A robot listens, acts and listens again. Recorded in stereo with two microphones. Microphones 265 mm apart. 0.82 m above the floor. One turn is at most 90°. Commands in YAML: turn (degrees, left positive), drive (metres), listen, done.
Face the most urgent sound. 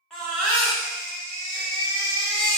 turn: 30
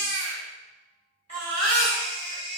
turn: -30
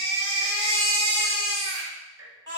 turn: -15
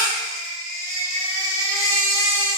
done: "Facing the baby crying, 1 to 2 m away."